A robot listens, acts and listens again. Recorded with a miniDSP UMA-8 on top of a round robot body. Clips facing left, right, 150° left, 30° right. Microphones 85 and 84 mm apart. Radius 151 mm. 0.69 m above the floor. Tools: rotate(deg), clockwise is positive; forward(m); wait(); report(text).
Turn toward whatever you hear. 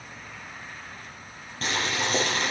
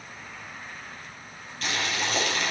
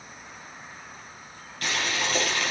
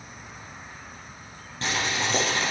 rotate(-35)
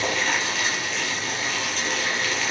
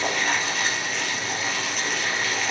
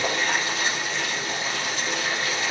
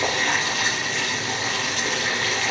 report("Facing the boiling, over 4 m away.")